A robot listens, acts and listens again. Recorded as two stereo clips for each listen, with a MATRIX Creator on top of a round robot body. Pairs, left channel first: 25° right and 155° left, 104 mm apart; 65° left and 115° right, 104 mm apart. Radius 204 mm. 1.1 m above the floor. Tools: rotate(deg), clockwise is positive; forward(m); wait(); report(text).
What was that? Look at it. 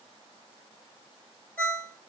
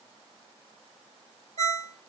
rotate(100)
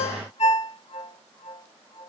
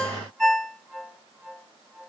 rotate(20)
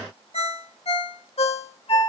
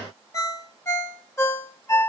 report("Found it: a ringtone, straight ahead, 1 to 2 m away.")